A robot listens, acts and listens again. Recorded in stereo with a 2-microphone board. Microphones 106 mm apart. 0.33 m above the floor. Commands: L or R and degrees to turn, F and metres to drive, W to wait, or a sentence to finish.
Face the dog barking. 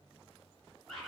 W
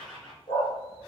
L40
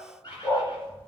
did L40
L15
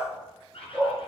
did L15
L15
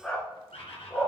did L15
L15
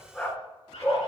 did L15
L20
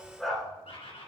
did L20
Facing the dog barking, 1 to 2 m away.